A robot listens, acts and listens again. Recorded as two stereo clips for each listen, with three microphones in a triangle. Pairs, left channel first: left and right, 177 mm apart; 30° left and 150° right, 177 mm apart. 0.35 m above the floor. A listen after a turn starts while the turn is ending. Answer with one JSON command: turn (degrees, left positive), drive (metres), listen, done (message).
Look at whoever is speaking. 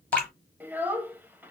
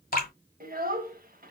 {"turn": -170}
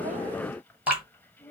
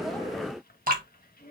{"turn": 10}
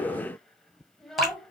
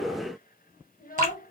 {"done": "Facing the child speaking, 1 to 2 m away."}